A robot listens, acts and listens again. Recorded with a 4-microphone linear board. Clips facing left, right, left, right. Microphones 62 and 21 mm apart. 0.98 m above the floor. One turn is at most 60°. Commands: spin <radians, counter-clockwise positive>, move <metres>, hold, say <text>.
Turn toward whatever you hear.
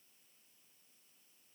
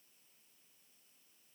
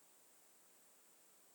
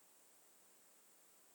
hold
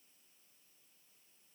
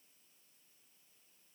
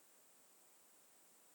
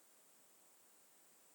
hold
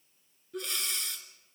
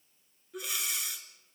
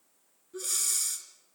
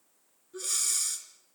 spin -0.52
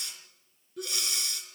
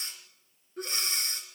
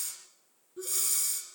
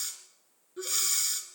spin -1.05
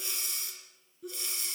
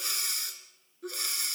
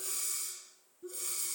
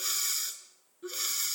spin -1.05
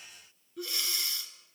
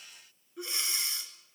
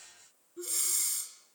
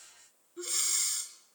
spin -0.44
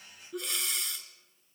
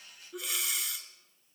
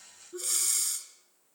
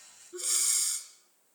say Found it: breathing, straight ahead, 2 to 4 m away.